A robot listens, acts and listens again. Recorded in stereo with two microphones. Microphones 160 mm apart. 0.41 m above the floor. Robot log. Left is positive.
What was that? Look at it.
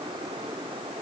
cmd idle
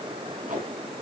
note: The tape being pulled: about 60° right or 120° right.
cmd yaw -60
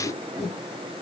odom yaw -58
end: Found it: tape being pulled, straight ahead.